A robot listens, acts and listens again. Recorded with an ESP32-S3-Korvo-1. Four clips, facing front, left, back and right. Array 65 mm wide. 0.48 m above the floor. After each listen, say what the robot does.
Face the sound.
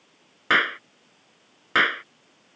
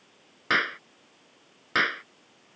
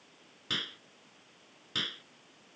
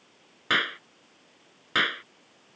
Facing the clap.